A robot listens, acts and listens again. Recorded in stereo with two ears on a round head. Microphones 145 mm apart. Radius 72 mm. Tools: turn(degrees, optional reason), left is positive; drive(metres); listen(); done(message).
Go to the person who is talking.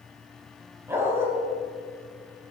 listen()
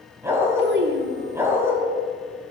turn(degrees=-90)
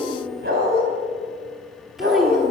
drive(metres=1.0)
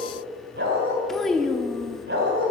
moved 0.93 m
drive(metres=1.0)
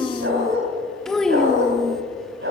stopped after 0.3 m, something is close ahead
done("I am next to the child speaking.")